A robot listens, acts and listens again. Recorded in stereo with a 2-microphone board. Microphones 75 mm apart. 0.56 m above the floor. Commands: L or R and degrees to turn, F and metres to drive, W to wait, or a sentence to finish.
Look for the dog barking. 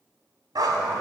R70
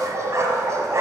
R45
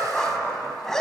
Facing the dog barking, 1 to 2 m away.